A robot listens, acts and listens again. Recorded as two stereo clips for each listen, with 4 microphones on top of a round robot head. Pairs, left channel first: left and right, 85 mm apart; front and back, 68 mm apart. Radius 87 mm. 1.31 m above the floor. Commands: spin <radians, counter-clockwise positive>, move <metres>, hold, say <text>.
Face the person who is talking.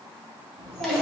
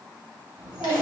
spin -1.75
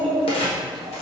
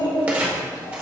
say Found it: a child speaking, straight ahead, 2 to 4 m away.